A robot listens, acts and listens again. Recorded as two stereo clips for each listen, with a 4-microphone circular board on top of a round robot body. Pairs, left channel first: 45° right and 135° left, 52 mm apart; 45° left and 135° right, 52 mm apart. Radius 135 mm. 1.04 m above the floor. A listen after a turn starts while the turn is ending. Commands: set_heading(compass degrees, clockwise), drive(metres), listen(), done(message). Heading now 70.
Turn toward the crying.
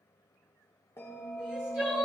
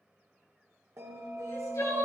set_heading(10)
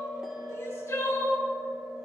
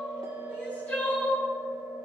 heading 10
set_heading(25)
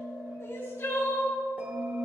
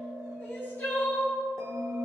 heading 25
done("Facing the crying, 2 to 4 m away.")